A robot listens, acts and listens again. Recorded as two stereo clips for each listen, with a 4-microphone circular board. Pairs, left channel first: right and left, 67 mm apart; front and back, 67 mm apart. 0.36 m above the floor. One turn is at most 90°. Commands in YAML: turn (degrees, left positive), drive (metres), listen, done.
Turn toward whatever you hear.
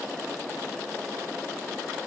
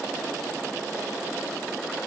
listen: true
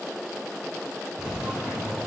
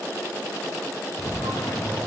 turn: 10
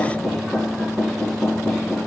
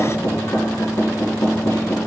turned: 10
done: "Found it: knocking, straight ahead, 2 to 4 m away."